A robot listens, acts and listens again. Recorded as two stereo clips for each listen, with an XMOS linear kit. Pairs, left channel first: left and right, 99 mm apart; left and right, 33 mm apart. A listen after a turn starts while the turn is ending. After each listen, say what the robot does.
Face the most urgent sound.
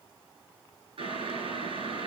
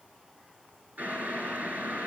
Keep listening.
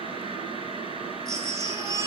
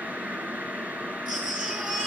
Turn 35° right.
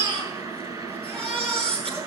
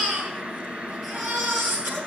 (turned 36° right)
Turn 110° right.
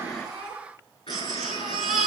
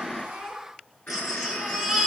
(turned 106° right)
Found it: a baby crying, straight ahead, over 4 m away.